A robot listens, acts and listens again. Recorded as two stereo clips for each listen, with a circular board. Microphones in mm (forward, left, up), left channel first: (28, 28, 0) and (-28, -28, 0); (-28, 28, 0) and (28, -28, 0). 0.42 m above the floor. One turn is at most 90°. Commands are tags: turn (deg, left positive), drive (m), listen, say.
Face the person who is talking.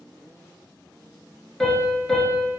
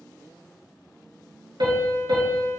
<listen/>
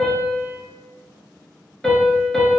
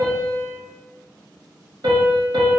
<listen/>
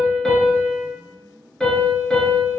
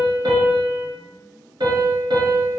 <say>I can't make out anyone speaking, only a piano.</say>